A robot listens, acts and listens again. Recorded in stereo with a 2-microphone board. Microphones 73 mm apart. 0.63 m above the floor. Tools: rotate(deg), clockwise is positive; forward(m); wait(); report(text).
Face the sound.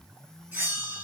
rotate(30)
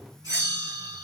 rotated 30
rotate(120)
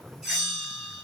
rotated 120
report("Found it: a bell, straight ahead.")